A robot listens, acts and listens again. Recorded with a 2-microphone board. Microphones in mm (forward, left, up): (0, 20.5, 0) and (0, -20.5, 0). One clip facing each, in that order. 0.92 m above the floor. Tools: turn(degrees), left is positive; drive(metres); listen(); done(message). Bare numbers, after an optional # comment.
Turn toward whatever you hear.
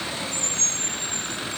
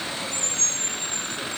listen()
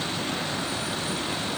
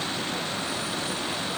listen()
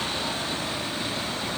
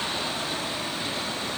done("I can't make out anything to turn to.")